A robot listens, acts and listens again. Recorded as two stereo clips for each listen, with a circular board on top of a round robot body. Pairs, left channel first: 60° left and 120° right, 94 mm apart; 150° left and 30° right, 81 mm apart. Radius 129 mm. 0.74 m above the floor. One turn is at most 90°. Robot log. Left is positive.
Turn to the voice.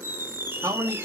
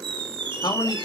note: The man speaking: 175° right.
cmd yaw -90
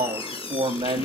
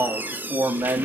note: The man speaking is now 85° right.
cmd yaw -85
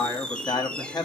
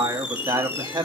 note: The man speaking is now 15° left.
cmd yaw +15
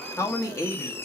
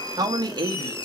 end: Found it: a man speaking, straight ahead, 1 to 2 m away.